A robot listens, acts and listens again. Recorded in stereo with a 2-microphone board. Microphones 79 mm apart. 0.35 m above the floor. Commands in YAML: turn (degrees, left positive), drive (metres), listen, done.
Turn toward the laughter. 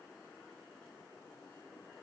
listen: true
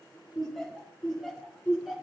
turn: -30
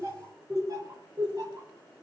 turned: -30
turn: -130
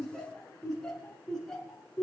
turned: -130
done: "Found it: laughter, straight ahead."